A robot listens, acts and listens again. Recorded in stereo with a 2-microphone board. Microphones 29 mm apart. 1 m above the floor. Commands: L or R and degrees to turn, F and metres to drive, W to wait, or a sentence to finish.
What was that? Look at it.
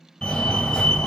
L25
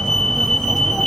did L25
Found it: a fire alarm, straight ahead.